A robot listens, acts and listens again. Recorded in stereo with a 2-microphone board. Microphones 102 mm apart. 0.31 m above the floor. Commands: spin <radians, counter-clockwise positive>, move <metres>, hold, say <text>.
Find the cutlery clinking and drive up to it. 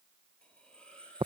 spin 0.52
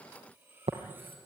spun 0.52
spin -0.35
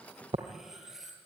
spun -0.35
move 1.0
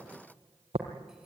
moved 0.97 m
hold
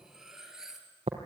move 1.0
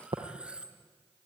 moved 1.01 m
spin -0.17
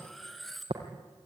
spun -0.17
move 1.0
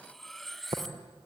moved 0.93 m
move 1.0
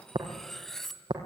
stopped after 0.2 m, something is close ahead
say I am next to the cutlery clinking.